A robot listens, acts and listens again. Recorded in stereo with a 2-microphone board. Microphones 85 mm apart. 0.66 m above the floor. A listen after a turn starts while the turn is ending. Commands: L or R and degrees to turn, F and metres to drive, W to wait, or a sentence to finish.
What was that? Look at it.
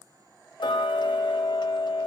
L65
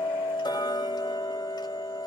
L55
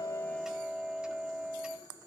R10
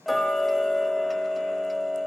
Found it: ticking, straight ahead.